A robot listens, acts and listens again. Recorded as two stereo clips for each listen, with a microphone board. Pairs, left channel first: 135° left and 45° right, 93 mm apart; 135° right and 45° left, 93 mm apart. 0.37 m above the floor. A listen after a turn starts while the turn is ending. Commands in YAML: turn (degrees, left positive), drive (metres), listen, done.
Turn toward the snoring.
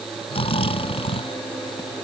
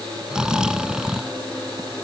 turn: 125
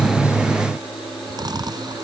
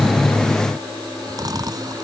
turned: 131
done: "Facing the snoring."